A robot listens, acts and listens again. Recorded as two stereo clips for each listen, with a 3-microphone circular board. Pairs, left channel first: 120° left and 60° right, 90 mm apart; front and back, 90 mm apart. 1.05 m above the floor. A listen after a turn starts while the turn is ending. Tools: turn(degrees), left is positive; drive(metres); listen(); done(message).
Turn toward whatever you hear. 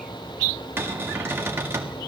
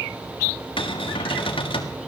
done("Facing the cupboard door.")